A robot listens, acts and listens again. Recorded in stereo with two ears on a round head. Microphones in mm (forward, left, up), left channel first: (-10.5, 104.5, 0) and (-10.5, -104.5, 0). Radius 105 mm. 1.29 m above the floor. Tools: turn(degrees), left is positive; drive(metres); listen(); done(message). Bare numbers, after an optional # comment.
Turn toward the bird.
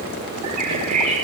turn(-90)
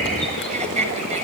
listen()
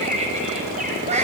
listen()
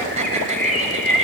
done("Found it: a bird, straight ahead, over 4 m away.")